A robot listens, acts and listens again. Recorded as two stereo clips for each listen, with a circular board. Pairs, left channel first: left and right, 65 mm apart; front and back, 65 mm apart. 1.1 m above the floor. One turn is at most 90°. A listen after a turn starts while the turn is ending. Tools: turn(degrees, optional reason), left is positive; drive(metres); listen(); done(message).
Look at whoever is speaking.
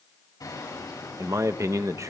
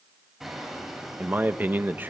turn(degrees=-90, reason="The man speaking: 120° right.")
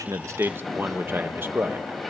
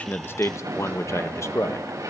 turn(degrees=-40, reason="The man speaking is now 40° right.")
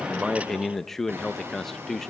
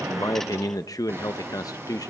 done("Facing the man speaking, under 1 m away.")